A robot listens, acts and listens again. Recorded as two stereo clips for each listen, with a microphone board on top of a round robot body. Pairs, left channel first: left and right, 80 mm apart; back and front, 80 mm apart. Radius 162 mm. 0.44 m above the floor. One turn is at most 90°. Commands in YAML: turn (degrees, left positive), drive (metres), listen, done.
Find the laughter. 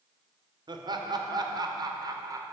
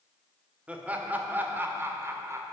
turn: -50
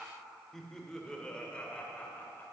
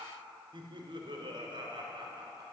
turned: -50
turn: 20
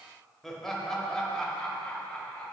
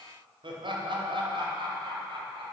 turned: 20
turn: 10
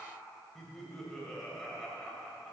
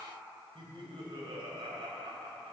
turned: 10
done: "Facing the laughter."